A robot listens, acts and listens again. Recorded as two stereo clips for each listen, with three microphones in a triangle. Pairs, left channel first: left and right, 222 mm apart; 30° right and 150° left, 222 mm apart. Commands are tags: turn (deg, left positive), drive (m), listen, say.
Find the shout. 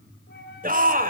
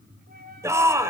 <turn deg="-135"/>
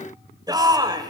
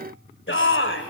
<turn deg="-20"/>
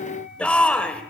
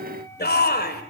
<say>Facing the shout, 2 to 4 m away.</say>